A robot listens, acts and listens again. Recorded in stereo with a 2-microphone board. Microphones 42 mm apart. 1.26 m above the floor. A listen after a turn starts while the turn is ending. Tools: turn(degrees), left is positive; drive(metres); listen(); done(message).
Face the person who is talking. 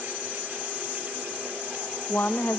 turn(degrees=60)
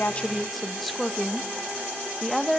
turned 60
done("Facing the woman speaking.")